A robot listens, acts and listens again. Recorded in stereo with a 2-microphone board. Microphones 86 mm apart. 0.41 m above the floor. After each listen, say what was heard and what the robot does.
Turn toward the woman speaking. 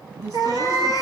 The woman speaking: about 45° right or 135° right. Turn 45° right.
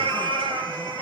Keep listening.
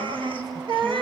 Facing the woman speaking, over 4 m away.